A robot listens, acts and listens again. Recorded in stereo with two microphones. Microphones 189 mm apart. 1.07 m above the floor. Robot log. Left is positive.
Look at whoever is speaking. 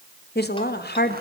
note: The woman speaking: about 60° left or 120° left.
cmd yaw +60
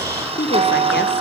note: So it is at 65° left.
cmd yaw +65
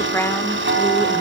note: The woman speaking is now 10° left.
cmd yaw +10
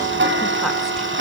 cmd idle
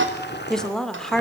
end: Found it: a woman speaking, straight ahead, 2 to 4 m away.